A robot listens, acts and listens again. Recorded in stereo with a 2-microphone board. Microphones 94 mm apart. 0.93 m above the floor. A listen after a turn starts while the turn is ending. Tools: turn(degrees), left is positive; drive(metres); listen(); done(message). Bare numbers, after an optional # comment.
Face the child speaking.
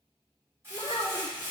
# The child speaking: about 60° left or 120° left.
turn(60)
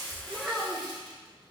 # So it is at 10° right.
turn(-10)
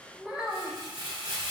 # The child speaking is now 10° right.
turn(-10)
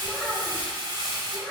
# The child speaking is now 10° right.
turn(-10)
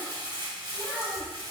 done("Facing the child speaking.")